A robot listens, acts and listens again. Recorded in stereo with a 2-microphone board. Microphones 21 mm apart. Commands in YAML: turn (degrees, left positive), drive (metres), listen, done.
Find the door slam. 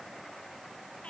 listen: true
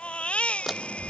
turn: -30
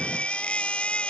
listen: true
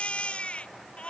done: "I heard a door slam, but can't make it out now. It was about 25° left or 145° right."